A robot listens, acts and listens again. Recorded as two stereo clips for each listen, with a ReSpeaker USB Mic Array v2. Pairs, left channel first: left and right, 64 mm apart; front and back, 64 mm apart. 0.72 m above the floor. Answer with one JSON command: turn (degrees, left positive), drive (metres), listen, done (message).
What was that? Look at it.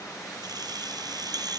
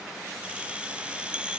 {"turn": -105}
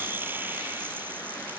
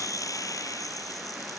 {"turn": -30}
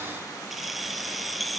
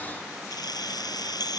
{"done": "Found it: keys jangling, straight ahead."}